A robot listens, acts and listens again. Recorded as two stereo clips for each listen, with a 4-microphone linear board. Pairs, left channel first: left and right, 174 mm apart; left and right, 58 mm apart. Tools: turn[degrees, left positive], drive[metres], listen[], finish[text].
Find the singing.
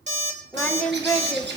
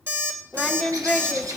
Action: turn[30]
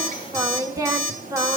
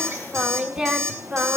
Thought: So it is at 20° right.
Action: turn[-20]
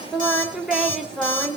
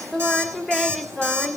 Action: finish[Facing the singing.]